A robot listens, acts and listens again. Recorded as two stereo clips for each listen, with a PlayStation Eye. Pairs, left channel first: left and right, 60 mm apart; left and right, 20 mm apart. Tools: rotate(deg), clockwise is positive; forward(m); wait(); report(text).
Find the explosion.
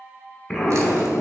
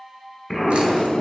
rotate(-30)
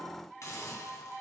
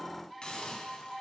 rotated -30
wait()
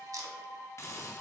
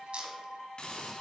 report("I heard an explosion, but can't make it out now. It was about 15° right or 135° left.")